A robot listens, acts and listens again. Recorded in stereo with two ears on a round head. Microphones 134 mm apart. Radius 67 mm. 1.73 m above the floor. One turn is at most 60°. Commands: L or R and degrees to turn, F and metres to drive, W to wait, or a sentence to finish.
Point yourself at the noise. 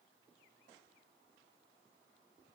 W
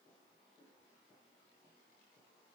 W
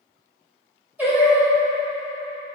R30
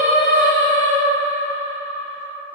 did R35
L35
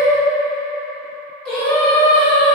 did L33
L10
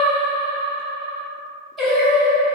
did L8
Found it: singing, straight ahead, 1 to 2 m away.